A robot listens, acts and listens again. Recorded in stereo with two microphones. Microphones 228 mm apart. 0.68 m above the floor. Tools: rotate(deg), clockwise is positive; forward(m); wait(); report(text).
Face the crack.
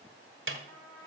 wait()
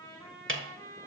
wait()
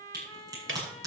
rotate(15)
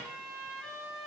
wait()
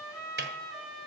report("I heard a crack, but can't make it out now. It was about straight ahead or 150° right.")